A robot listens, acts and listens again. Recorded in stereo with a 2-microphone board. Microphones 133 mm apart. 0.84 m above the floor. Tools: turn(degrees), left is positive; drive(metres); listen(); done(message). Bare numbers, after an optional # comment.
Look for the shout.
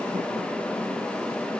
listen()
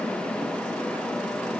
listen()
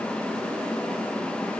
done("I can't make out a shout.")